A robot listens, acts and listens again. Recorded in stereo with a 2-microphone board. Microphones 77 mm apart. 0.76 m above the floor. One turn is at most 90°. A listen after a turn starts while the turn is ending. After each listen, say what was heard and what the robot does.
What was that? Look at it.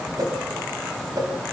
The whoosh: about 65° right or 115° right. Turn 65° right.
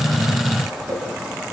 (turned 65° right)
So it is at 55° right. Turn 55° right.
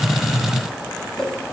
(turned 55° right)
Facing the whoosh.